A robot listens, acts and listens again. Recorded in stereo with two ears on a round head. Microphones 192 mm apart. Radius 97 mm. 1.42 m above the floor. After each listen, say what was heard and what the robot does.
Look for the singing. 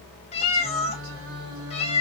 The singing: about 70° right or 110° right. Turn 70° right.
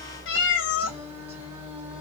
So it is at 10° right. Turn 10° right.
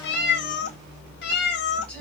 Keep listening.
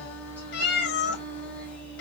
Found it: singing, straight ahead.